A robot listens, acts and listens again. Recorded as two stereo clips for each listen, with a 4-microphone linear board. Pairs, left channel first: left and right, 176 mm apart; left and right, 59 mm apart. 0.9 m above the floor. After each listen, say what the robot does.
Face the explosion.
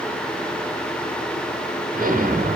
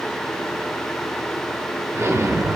Turn 50° right.
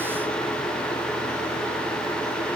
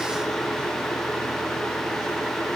Keep listening.
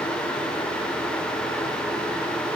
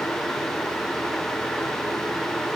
I heard an explosion, but can't make it out now. It was about straight ahead or 80° right.